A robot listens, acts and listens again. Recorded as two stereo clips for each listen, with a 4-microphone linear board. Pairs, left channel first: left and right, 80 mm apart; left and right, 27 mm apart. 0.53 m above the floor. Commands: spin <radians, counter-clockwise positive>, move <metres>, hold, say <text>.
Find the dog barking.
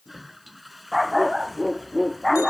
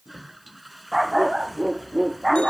spin 0.52
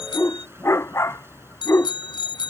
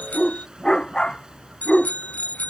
spin 2.53
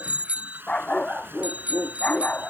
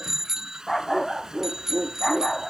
spin 0.26
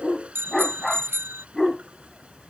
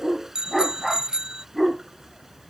say Found it: a dog barking, straight ahead.